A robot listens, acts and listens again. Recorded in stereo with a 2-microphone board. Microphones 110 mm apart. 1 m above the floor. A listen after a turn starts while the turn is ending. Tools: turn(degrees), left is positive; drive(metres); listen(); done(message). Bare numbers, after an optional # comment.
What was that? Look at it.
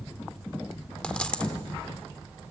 turn(30)
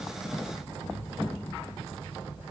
listen()
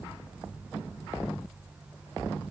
done("I heard a dropped coin, but can't make it out now. It was about 20° right or 140° left.")